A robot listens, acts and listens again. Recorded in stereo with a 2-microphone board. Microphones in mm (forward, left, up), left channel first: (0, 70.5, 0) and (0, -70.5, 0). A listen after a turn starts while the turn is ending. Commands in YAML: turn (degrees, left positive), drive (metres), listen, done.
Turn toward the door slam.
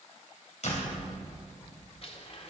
turn: 55
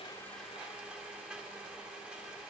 listen: true
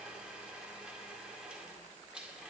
done: "I heard a door slam, but can't make it out now. It was about straight ahead or 70° left."